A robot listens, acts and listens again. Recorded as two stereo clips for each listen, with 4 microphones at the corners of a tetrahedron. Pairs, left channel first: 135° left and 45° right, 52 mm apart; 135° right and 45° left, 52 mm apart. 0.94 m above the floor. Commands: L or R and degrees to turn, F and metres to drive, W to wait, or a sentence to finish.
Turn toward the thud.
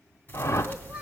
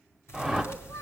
R165
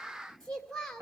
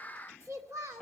Facing where the thud came from. I can't hear it now.